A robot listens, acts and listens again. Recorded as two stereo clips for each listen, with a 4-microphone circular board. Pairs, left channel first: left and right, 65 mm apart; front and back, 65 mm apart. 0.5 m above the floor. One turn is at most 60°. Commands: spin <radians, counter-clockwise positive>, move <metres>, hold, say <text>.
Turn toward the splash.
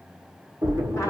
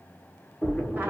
spin -1.05
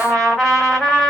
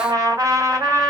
spin -0.26
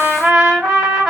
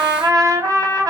say I heard a splash from this way, but can't make it out now.